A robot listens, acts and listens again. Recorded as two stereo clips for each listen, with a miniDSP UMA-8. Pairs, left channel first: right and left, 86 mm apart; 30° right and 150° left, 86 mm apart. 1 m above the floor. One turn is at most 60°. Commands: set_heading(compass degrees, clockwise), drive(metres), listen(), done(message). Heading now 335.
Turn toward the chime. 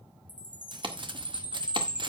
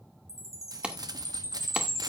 set_heading(320)
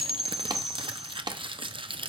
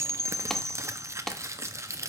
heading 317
done("Facing the chime.")